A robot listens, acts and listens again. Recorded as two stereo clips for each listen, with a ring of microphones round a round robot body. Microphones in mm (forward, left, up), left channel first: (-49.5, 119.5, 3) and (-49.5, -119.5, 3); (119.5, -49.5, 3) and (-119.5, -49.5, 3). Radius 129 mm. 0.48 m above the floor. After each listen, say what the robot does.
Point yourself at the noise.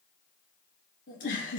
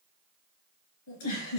Turn 30° left.
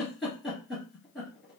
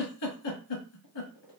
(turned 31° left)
Facing the giggle.